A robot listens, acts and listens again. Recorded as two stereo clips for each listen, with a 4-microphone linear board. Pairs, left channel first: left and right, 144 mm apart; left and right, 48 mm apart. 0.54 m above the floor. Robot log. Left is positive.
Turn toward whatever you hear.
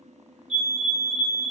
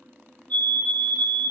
note: The fire alarm: about 45° left or 135° left.
cmd yaw +45
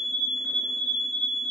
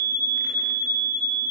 note: So it is at 80° left.
cmd yaw +80
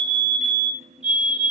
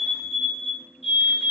end: Found it: a fire alarm, straight ahead.